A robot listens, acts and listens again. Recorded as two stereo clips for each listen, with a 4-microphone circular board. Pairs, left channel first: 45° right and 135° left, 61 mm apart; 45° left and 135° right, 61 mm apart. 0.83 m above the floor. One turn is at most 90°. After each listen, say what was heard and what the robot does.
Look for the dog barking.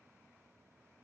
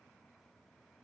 Keep listening.
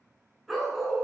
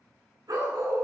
The dog barking: 135° right. Turn 90° right.
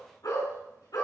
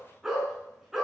The dog barking is now 50° right. Turn 50° right.
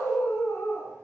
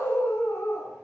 Facing the dog barking.